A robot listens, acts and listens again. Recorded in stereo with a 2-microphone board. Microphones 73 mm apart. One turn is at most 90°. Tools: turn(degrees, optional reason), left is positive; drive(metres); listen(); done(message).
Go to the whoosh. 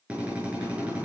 listen()
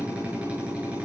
listen()
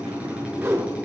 turn(degrees=-40, reason="The whoosh: about 40° right or 140° right.")
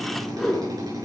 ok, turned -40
drive(metres=1.0)
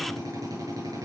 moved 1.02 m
listen()
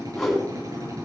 drive(metres=1.0)
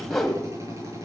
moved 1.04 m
drive(metres=1.0)
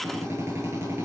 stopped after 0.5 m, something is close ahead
listen()
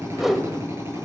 done("Arrived at the whoosh, straight ahead.")